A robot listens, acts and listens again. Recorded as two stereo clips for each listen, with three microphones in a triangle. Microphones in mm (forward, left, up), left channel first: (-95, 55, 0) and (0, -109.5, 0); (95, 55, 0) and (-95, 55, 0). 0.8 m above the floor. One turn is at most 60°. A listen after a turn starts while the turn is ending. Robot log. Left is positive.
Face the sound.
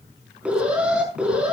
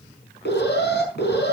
note: The alarm: 25° left.
cmd yaw +25
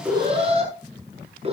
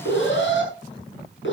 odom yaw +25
end: Facing the alarm.